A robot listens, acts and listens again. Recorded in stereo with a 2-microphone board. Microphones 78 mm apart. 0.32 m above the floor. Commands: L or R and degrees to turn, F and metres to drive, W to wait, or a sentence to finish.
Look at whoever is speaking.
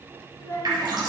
L35
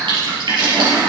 W
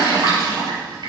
W
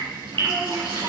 I heard a child speaking, but can't make it out now. It was about straight ahead or 110° left.